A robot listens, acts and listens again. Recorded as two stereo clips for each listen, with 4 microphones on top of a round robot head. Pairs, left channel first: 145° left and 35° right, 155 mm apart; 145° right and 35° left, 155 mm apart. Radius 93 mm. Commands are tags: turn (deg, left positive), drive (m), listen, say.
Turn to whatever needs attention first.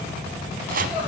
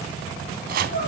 <turn deg="-120"/>
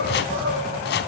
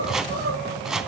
<say>Facing the crying.</say>